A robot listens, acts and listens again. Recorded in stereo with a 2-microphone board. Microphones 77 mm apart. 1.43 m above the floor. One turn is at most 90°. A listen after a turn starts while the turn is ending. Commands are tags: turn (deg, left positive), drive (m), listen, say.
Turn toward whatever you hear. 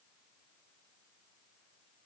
<listen/>
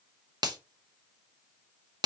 <turn deg="-60"/>
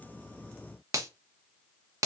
<turn deg="-45"/>
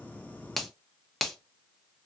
<say>Facing the finger snap.</say>